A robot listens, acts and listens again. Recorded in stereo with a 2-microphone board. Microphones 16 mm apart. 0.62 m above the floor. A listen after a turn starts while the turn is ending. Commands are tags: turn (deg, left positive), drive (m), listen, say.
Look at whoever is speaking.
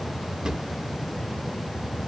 <listen/>
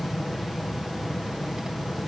<listen/>
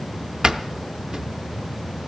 <say>I can't make out anyone speaking, only a drawer.</say>